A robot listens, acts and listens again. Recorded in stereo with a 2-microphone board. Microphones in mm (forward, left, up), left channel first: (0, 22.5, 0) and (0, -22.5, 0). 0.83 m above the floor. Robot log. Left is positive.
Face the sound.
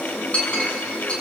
note: The clink: about 30° left or 150° left.
cmd yaw +30
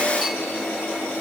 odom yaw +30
cmd idle
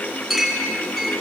end: Found it: a clink, straight ahead, over 4 m away.